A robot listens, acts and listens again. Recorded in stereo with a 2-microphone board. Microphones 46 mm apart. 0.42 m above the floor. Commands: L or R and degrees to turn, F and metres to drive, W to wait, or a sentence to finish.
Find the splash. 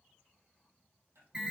W
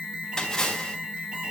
L15
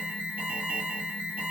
W
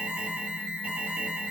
I heard a splash, but can't make it out now. It was about straight ahead or 150° left.